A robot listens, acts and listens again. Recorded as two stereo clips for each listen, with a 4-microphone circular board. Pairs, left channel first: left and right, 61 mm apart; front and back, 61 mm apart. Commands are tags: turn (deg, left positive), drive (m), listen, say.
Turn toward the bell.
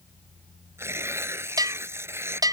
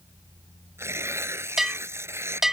<turn deg="-95"/>
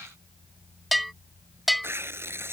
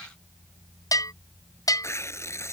<say>Facing the bell.</say>